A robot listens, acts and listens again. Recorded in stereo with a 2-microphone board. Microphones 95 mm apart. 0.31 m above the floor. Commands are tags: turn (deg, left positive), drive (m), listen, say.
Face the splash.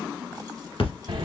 <turn deg="90"/>
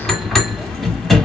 <say>I heard a splash from this way, but can't make it out now.</say>